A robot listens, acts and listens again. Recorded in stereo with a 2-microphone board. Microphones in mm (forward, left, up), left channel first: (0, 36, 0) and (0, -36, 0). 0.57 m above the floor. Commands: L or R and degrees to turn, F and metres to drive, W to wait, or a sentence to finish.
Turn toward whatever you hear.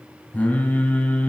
L15
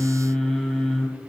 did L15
Facing the singing, 2 to 4 m away.